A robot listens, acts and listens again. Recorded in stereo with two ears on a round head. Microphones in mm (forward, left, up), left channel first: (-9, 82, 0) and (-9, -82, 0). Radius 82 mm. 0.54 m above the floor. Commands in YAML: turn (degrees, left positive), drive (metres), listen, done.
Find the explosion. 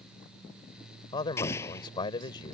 turn: 30
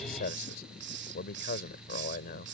listen: true
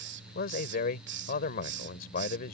done: "I heard an explosion, but can't make it out now. It was about 15° right or 135° left."